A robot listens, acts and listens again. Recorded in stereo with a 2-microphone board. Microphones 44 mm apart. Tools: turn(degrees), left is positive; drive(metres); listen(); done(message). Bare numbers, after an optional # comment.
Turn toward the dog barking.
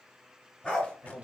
# The dog barking: about 20° left or 160° left.
turn(20)
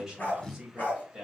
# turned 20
# The dog barking: about 40° left or 140° left.
turn(40)
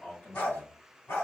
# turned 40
# So it is at 105° left.
turn(105)
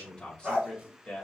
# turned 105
# The dog barking is now 25° right.
turn(-25)
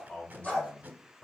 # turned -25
done("Found it: a dog barking, straight ahead.")